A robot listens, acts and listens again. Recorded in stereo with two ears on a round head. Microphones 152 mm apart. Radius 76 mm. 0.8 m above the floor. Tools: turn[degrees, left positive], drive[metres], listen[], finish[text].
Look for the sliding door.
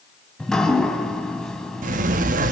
Thought: The sliding door: about 50° right or 130° right.
Action: turn[-50]
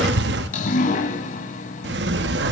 Thought: So it is at 80° right.
Action: turn[-80]
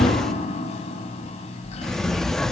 Action: finish[Facing the sliding door.]